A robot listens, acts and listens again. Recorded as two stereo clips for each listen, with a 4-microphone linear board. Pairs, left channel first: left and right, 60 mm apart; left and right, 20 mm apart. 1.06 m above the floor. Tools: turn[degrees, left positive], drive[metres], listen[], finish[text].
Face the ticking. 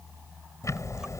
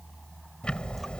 Thought: The ticking: about 60° left or 120° left.
Action: turn[60]
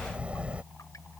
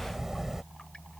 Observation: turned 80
Thought: So it is at 20° right.
Action: turn[-20]
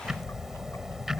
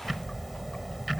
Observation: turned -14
Action: finish[Found it: ticking, straight ahead.]